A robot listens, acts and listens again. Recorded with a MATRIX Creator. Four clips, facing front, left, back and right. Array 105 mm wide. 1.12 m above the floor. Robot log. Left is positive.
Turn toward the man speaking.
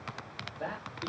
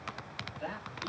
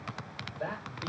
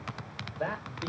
note: The man speaking: 85° right.
cmd yaw -85
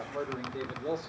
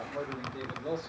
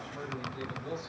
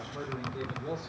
note: The man speaking is now 25° left.
cmd yaw +25
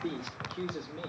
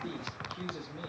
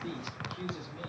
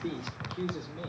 note: The man speaking is now 10° right.
cmd yaw -10
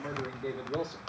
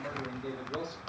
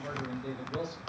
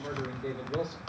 end: Facing the man speaking, 2 to 4 m away.